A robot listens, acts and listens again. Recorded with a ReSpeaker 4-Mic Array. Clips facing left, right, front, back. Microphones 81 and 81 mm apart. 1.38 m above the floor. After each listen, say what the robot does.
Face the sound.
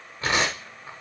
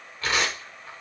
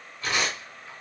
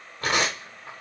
Turn 155° left.
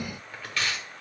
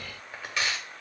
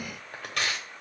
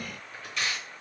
Turn 20° right.
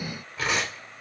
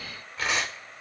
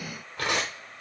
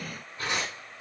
Facing the tearing paper.